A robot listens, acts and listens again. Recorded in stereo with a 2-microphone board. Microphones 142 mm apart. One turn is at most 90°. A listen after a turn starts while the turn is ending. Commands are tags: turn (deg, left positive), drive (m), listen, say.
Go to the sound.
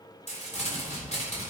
<turn deg="50"/>
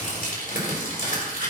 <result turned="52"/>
<turn deg="75"/>
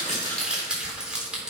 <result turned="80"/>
<drive m="1.0"/>
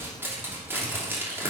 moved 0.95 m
<turn deg="-15"/>
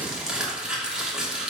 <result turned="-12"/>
<drive m="1.0"/>
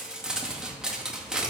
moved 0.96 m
<drive m="1.0"/>
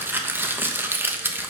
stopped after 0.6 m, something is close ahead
<turn deg="-15"/>
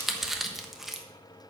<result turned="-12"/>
<say>Arrived at the crumpling, straight ahead.</say>